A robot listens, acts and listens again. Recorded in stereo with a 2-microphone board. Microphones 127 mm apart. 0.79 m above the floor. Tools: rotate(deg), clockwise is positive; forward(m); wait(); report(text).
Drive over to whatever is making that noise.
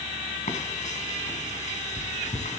rotate(-70)
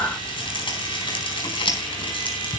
rotate(-40)
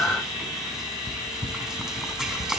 forward(1.0)
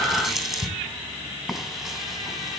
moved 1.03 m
forward(1.0)
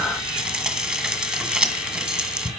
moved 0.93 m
rotate(10)
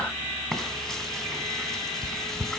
forward(1.0)
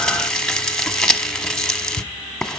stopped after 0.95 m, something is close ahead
report("I am next to the frying.")